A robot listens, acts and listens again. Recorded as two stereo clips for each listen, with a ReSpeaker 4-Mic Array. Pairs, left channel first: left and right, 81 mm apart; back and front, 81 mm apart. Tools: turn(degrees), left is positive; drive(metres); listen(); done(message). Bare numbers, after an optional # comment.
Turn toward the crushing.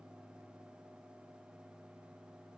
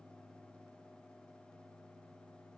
listen()
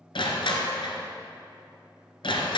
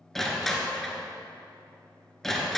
# The crushing: 95° left.
turn(95)
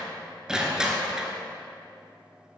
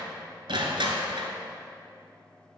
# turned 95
# The crushing is now 10° right.
turn(-10)
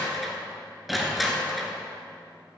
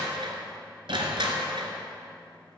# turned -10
done("Found it: crushing, straight ahead, 1 to 2 m away.")